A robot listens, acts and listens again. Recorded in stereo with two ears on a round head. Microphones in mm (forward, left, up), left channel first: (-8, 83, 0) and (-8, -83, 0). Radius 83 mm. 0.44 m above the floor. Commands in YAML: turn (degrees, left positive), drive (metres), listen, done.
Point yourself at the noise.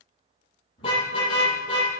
turn: 25
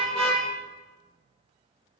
done: "Facing the car horn."